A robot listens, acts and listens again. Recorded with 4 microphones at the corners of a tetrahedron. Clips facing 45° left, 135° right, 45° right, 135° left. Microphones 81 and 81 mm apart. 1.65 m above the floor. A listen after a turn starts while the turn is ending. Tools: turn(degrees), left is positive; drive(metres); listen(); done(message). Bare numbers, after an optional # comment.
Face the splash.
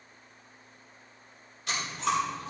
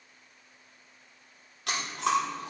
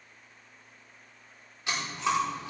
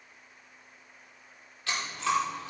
listen()
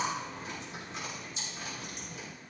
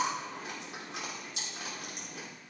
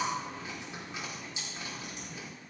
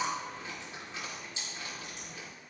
listen()
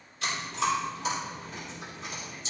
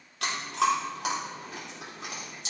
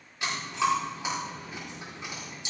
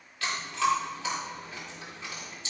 done("I can't make out a splash to turn to.")